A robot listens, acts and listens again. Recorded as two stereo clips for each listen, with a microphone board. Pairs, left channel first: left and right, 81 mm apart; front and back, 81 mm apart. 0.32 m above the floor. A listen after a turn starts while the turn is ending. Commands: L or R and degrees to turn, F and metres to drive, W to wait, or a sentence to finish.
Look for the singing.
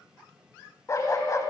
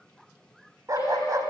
L45
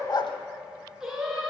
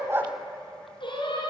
Facing the singing.